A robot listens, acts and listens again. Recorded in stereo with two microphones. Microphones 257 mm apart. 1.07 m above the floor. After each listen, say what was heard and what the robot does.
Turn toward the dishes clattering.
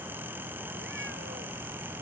Keep listening.
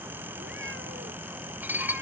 Turn 30° right.
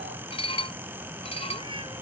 So it is at 20° left. Turn 20° left.
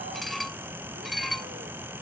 Found it: dishes clattering, straight ahead.